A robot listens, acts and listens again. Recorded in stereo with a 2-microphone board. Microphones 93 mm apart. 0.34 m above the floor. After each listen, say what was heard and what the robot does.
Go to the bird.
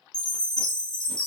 Keep listening.
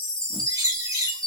The bird: about 40° right or 140° right. Turn 40° right.
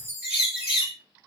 So it is at 15° right. Turn 15° right.
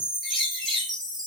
Drive 1.0 m forward.
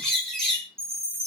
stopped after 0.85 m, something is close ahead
The bird is now 10° left. Turn 10° left.
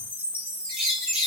I am next to the bird.